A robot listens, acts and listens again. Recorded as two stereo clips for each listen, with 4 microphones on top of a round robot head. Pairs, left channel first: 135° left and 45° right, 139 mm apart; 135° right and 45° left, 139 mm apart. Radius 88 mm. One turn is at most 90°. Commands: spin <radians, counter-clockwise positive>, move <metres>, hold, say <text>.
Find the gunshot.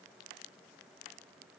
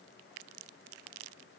hold
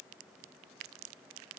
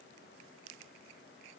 hold
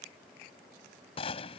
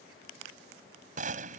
spin 1.40
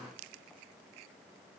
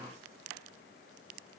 say Facing where the gunshot came from. I can't hear it now.